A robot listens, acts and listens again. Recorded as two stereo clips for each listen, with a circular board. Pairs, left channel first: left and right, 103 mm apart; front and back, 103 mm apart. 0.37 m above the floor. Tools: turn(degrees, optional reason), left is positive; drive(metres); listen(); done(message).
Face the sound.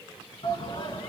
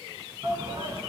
turn(degrees=120, reason="The shout: 120° left.")
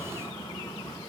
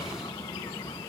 turn(degrees=40, reason="The shout is now 40° left.")
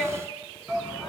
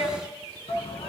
done("Found it: a shout, straight ahead.")